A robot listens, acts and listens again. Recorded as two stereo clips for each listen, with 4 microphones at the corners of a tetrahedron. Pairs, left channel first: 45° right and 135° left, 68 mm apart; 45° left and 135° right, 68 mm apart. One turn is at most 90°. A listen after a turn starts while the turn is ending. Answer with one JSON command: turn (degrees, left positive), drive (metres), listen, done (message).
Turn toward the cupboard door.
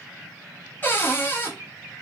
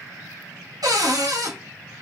{"turn": -90}
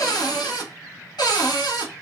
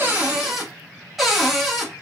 {"turn": -45}
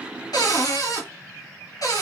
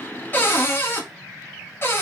{"turn": -10}
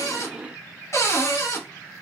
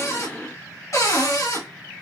{"done": "Facing the cupboard door, under 1 m away."}